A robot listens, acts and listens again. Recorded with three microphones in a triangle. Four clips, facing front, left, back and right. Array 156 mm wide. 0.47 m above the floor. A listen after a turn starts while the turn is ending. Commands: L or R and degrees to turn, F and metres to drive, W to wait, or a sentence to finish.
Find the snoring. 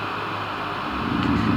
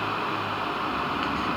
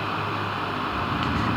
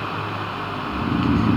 R50
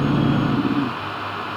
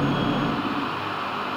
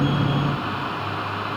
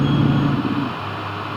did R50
W
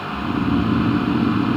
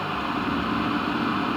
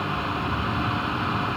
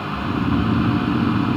R20
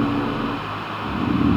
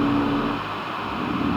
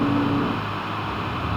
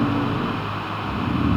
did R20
Found it: snoring, straight ahead.